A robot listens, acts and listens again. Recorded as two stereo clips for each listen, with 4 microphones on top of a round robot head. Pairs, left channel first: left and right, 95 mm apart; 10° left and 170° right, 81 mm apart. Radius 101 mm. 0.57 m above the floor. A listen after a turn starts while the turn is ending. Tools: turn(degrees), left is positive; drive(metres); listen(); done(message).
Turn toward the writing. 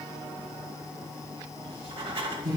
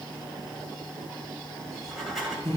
turn(degrees=-80)
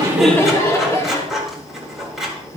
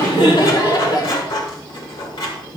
done("Facing the writing, 2 to 4 m away.")